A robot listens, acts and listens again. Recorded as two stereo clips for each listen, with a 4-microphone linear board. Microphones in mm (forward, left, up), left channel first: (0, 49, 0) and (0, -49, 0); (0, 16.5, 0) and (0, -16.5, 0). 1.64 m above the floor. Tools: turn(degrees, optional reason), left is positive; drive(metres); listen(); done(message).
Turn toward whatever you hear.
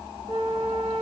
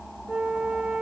turn(degrees=-60, reason="The flute: about 60° right or 120° right.")
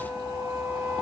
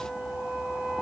turn(degrees=-45, reason="So it is at 45° right.")
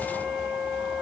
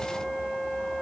done("Found it: a flute, straight ahead, 1 to 2 m away.")